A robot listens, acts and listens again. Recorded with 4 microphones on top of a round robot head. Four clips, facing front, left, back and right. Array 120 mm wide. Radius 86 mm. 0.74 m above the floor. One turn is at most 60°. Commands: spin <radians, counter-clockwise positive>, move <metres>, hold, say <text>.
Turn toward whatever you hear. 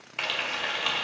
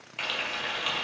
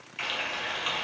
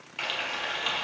say Found it: frying, straight ahead, 1 to 2 m away.